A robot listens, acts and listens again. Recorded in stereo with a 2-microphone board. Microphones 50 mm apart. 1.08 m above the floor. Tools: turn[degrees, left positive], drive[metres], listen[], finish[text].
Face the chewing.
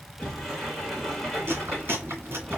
Thought: The chewing: about 55° right or 125° right.
Action: turn[-55]
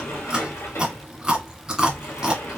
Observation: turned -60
Thought: So it is at 15° right.
Action: turn[-15]
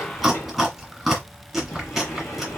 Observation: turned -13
Action: finish[Found it: chewing, straight ahead, 1 to 2 m away.]